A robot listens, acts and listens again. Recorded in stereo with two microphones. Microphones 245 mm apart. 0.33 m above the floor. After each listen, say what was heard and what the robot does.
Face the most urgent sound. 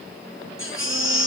The baby crying: about 55° left or 125° left. Turn 55° left.
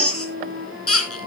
So it is at 70° left. Turn 70° left.
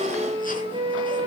Keep listening.
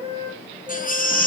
The baby crying is now 35° left. Turn 35° left.
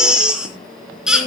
Found it: a baby crying, straight ahead.